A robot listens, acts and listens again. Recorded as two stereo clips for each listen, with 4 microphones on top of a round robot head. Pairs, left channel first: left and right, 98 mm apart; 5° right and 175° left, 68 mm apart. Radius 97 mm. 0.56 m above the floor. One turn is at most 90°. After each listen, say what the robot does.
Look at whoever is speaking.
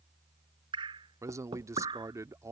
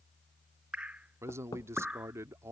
Turn 90° right.
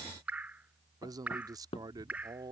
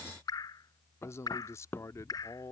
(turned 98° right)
Turn 45° right.
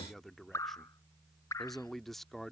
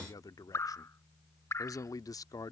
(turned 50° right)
Facing the man speaking.